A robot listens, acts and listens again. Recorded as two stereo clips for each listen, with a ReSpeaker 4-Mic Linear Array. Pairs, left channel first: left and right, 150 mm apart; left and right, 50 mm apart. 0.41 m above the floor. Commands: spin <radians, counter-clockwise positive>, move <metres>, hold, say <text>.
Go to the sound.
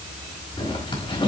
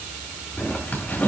spin 0.61
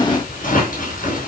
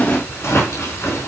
spin 1.92
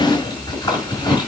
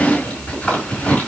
spin 0.52
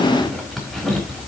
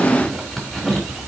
move 1.0
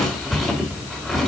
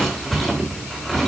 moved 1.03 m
move 1.0
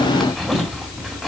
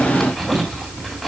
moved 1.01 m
move 1.0
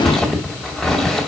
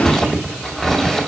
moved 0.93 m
move 1.0
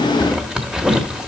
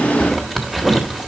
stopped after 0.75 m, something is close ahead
say Arrived at the zipper, straight ahead.